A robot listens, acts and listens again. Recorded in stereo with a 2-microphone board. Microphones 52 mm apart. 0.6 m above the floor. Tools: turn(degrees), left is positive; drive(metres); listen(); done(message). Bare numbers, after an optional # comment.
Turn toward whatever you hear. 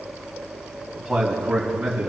turn(-30)
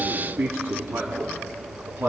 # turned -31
# So it is at 145° right.
turn(-145)
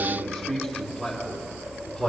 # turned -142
done("Found it: a man speaking, straight ahead.")